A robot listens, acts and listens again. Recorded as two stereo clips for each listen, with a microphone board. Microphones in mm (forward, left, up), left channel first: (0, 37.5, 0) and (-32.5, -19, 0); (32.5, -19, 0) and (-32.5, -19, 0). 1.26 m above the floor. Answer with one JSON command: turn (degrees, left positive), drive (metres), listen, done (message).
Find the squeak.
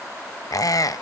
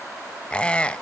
{"turn": 70}
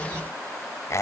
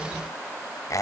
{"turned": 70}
{"turn": 25}
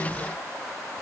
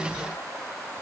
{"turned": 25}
{"listen": true}
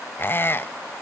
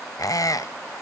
{"turn": 10}
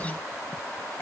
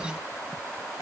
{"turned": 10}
{"listen": true}
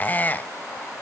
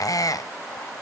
{"done": "Found it: a squeak, straight ahead, under 1 m away."}